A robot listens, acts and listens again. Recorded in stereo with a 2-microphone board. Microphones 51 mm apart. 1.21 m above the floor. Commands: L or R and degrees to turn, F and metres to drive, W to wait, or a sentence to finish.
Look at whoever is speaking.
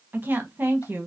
R35
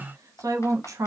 R105
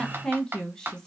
L15
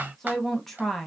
Found it: a woman speaking, straight ahead.